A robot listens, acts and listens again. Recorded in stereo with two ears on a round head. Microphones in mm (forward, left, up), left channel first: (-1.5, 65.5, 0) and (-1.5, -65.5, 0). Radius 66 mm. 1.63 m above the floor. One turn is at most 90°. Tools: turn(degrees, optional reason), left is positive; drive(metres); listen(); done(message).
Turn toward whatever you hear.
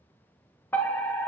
turn(degrees=30)
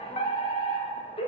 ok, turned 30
turn(degrees=90, reason="So it is at 135° left.")
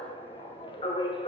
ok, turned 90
turn(degrees=35, reason="The fire alarm is now 35° left.")
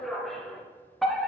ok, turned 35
done("Facing the fire alarm.")